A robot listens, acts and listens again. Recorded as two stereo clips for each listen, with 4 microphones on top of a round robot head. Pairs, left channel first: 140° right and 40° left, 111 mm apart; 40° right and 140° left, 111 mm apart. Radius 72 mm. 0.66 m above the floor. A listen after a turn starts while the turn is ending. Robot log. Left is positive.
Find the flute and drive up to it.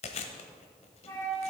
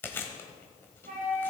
note: The flute: 155° left.
cmd yaw +155
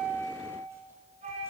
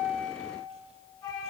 note: The flute is now 15° left.
cmd yaw +15
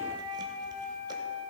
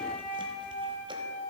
cmd fwd 1.0
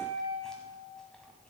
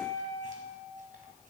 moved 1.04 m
cmd fwd 1.0
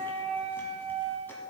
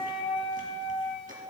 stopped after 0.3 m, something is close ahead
end: I am next to the flute.